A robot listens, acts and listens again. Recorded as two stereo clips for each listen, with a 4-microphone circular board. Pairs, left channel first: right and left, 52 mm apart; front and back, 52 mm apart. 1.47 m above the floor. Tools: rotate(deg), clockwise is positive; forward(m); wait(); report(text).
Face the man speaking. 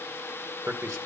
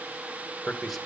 rotate(-90)
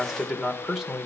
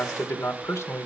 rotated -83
report("Found it: a man speaking, straight ahead.")